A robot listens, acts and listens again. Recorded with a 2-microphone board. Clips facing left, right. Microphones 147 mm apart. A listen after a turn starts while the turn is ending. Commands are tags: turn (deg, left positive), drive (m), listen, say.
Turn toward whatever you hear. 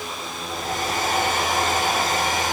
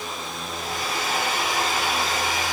<turn deg="45"/>
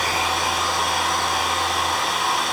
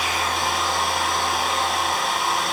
<say>Found it: a hair dryer, straight ahead, over 4 m away.</say>